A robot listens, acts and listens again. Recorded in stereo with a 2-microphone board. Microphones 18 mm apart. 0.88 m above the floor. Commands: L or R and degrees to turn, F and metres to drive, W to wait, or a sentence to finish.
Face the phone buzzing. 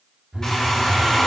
R60
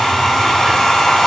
W
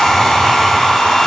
W
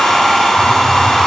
I heard a phone buzzing, but can't make it out now. It was about straight ahead or 60° right.